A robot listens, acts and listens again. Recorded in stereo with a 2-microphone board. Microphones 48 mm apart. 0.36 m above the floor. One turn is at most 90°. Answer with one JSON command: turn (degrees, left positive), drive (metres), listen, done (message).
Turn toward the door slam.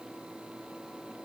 {"listen": true}
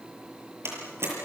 {"turn": -60}
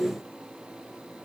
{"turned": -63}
{"listen": true}
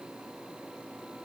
{"done": "I heard a door slam, but can't make it out now. It was about 5° left or 60° right."}